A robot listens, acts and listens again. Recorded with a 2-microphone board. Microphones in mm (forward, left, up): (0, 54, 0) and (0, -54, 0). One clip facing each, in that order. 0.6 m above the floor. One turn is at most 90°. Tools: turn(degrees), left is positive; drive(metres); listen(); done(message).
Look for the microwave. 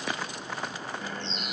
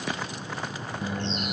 turn(degrees=-30)
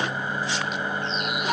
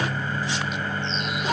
turn(degrees=20)
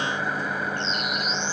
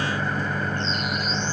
done("Facing the microwave.")